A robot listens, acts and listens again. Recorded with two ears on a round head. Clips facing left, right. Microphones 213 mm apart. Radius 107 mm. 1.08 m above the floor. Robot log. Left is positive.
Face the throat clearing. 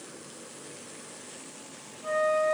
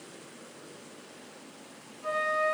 cmd idle
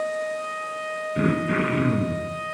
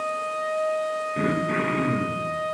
cmd yaw +30
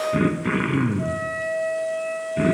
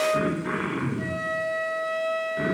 note: So it is at 140° left.
cmd yaw +140
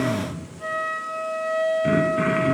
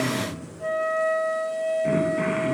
note: The throat clearing is now 15° left.
cmd yaw +15
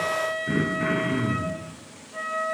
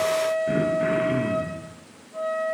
end: Found it: throat clearing, straight ahead, under 1 m away.